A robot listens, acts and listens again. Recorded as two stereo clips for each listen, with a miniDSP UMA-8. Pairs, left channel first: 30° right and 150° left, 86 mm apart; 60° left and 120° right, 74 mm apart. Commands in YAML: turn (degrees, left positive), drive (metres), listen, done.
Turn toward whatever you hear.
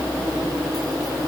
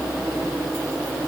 listen: true
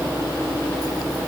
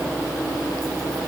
listen: true
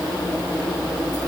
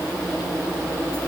done: "I can't make out anything to turn to."